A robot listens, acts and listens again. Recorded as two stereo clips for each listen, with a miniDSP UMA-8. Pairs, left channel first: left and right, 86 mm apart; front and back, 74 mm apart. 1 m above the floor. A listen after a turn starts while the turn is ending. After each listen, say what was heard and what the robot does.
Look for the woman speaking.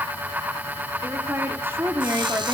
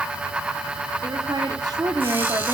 The woman speaking: 150° right. Turn 150° right.
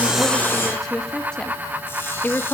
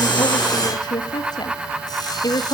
The woman speaking is now 25° left. Turn 25° left.
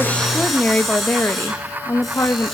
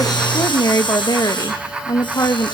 The woman speaking is now 35° left. Turn 35° left.
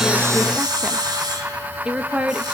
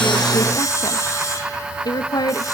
The woman speaking is now 15° right. Turn 15° right.
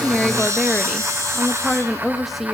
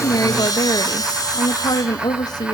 Found it: a woman speaking, straight ahead, 1 to 2 m away.